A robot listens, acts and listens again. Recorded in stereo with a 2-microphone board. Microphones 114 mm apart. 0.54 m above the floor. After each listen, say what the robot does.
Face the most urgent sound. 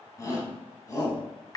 Turn 30° left.
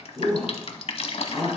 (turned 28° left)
Found it: a shout, straight ahead.